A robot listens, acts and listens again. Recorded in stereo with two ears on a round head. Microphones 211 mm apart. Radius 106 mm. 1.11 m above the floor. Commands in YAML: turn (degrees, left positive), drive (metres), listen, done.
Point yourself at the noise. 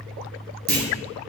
turn: -40
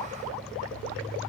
listen: true
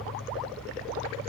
done: "I heard a clunk, but can't make it out now. It was about straight ahead or 100° right."